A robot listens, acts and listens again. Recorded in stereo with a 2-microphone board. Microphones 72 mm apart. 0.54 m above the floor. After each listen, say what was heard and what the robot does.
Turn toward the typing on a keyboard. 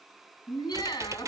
The typing on a keyboard: about 45° right or 135° right. Turn 45° right.
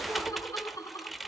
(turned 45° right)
Found it: typing on a keyboard, straight ahead.